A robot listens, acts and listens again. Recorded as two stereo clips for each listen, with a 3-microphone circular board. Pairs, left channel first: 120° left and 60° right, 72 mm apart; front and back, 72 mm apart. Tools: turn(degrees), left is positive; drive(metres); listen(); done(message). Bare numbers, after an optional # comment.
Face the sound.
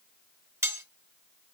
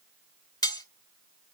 # The cutlery clinking: 15° right.
turn(-15)
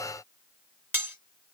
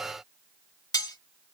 done("Found it: cutlery clinking, straight ahead, 1 to 2 m away.")